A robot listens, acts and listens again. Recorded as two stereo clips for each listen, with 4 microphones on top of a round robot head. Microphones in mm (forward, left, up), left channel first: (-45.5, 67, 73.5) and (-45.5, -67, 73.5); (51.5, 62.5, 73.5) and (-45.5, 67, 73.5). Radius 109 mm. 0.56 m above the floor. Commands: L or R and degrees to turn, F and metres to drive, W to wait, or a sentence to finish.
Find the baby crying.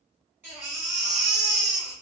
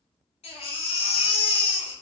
R15
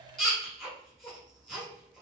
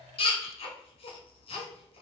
Facing the baby crying, 1 to 2 m away.